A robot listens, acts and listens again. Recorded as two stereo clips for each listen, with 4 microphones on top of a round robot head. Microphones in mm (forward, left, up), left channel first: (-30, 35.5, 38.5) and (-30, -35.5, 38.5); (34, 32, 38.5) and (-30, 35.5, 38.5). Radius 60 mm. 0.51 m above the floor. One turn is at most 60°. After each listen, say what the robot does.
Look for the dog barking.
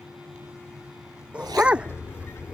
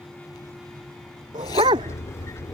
Turn 60° right.
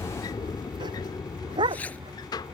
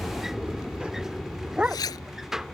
Turn 60° right.
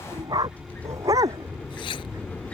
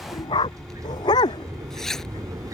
Turn 35° right.
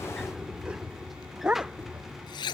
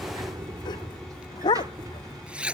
Turn 10° right.
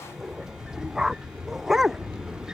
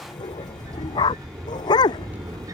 Facing the dog barking.